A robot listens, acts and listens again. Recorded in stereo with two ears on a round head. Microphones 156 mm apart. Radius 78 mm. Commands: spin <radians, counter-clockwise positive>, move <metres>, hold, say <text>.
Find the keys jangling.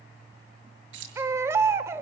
spin -1.31
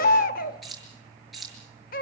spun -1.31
say Facing the keys jangling.